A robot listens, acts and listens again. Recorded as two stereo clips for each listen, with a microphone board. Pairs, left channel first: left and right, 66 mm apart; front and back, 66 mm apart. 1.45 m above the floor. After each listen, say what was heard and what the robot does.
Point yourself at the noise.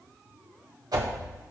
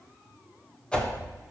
The whoosh: 75° right. Turn 75° right.
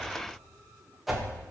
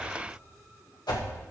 Facing the whoosh.